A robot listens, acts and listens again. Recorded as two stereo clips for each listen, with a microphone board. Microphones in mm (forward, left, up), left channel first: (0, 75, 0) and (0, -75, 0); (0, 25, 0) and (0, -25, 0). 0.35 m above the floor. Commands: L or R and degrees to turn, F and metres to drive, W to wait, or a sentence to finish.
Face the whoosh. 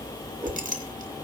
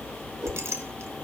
R30
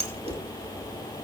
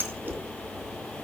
L20
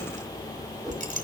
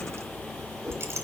Facing the whoosh, over 4 m away.